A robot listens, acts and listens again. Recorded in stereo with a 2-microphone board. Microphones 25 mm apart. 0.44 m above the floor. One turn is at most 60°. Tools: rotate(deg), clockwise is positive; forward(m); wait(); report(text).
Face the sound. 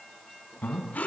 rotate(-60)
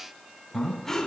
rotate(-10)
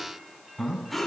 report("Found it: breathing, straight ahead, 2 to 4 m away.")